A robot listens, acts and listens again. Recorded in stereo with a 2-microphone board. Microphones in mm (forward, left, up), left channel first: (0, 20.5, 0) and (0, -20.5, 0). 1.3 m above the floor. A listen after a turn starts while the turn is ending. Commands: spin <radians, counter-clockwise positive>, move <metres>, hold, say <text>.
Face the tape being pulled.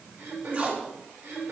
spin -0.70
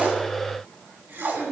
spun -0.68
spin -1.83
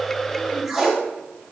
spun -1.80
say Facing the tape being pulled.